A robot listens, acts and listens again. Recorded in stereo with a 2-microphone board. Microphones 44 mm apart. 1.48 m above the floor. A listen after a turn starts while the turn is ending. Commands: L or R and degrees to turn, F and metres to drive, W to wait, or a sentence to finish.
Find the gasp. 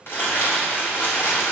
W
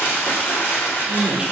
R70
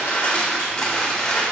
W
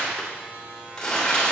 I heard a gasp, but can't make it out now. It was about straight ahead or 40° right.